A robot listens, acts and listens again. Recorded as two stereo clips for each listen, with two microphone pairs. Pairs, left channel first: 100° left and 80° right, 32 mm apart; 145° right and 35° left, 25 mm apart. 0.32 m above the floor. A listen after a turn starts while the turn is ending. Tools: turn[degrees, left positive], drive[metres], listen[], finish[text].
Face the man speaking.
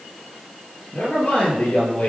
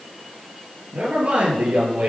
Thought: The man speaking: 60° left.
Action: turn[60]
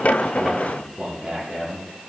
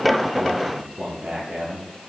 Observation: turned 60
Thought: The man speaking is now 10° right.
Action: turn[-10]
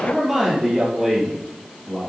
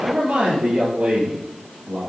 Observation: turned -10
Action: finish[Found it: a man speaking, straight ahead, over 4 m away.]